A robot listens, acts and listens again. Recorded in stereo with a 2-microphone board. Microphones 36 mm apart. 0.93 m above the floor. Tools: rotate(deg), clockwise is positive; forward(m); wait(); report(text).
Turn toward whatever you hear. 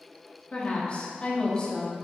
rotate(-20)
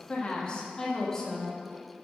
rotate(-30)
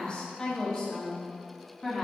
rotate(-30)
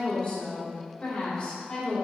rotate(-150)
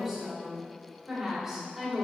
rotate(10)
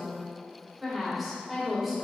report("Found it: a woman speaking, straight ahead, 2 to 4 m away.")